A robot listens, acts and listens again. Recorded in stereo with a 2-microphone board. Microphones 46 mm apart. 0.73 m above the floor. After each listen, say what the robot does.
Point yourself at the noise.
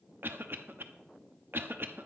Turn 55° right.
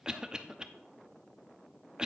Turn 20° right.
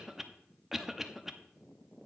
Turn 10° right.
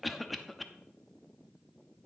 Found it: a cough, straight ahead.